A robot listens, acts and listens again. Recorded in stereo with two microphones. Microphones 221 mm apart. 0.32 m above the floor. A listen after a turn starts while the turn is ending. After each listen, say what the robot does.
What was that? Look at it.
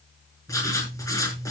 Turn 30° left.
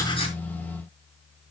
Keep listening.
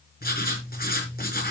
Turn 135° left.
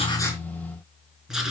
Facing the writing, over 4 m away.